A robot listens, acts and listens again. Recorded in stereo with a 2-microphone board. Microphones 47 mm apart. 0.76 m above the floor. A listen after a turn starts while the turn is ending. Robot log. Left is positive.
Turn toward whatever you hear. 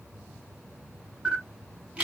note: The camera shutter: about 30° right or 150° right.
cmd yaw -30
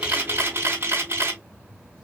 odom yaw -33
note: So it is at 120° right.
cmd yaw -120
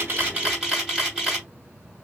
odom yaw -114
end: Found it: a camera shutter, straight ahead, 2 to 4 m away.